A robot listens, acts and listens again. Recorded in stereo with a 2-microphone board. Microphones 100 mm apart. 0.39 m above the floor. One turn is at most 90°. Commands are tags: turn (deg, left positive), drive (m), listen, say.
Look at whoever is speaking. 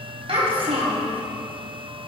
<turn deg="-65"/>
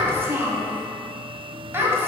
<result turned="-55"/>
<turn deg="-25"/>
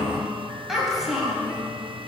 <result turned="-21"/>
<say>Facing the child speaking, 2 to 4 m away.</say>